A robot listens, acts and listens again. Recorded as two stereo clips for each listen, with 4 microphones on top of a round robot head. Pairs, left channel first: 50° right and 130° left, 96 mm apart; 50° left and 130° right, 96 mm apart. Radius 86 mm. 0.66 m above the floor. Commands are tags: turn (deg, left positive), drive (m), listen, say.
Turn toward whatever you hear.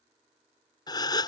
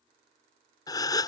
<say>Found it: a gasp, straight ahead.</say>